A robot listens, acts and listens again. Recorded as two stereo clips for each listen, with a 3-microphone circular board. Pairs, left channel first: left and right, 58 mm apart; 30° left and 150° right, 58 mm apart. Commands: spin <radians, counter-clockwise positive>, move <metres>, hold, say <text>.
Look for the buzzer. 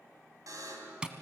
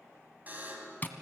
spin -1.57
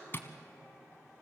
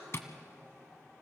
hold
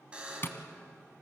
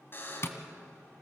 spin -0.35
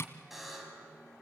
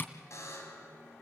say Found it: a buzzer, straight ahead.